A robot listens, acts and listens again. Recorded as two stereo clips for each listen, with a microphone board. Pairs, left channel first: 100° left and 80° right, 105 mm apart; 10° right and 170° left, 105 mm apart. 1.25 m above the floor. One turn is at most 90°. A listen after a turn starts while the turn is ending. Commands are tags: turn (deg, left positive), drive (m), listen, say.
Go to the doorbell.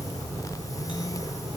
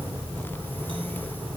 <listen/>
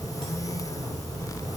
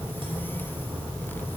<listen/>
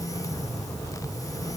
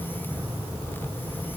<say>I can't make out a doorbell.</say>